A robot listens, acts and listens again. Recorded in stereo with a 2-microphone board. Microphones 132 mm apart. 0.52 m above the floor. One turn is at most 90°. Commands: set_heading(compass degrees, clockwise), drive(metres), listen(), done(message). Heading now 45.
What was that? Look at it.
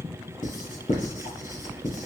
set_heading(330)
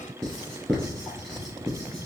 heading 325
done("Found it: writing, straight ahead.")